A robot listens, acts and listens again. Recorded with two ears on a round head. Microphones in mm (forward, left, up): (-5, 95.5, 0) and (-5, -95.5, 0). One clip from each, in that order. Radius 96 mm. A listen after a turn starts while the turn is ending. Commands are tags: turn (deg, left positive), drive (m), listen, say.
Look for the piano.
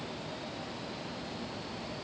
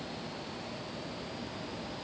<listen/>
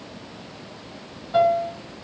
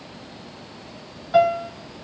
<turn deg="-55"/>
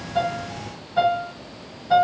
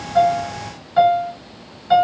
<turn deg="-65"/>
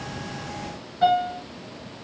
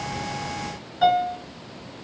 <turn deg="-15"/>
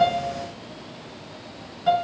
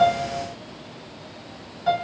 <say>Facing the piano.</say>